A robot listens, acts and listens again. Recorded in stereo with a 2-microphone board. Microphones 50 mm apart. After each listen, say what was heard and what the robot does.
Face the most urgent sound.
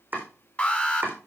The alarm: about 30° left or 150° left. Turn 30° left.
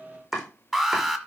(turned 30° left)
Facing the alarm, 1 to 2 m away.